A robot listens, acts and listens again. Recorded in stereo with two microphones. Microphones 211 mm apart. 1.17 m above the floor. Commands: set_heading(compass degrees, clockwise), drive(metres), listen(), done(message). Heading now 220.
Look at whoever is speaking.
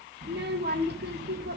set_heading(270)
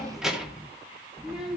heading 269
done("Found it: a child speaking, straight ahead, 2 to 4 m away.")